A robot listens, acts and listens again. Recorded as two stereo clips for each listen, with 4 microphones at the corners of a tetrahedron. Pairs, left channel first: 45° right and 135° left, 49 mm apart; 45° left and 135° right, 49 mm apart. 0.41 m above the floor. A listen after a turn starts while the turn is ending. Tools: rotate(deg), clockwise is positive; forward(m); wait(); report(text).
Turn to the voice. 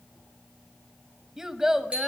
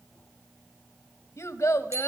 rotate(-55)
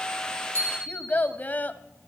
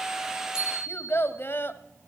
report("Facing the child speaking.")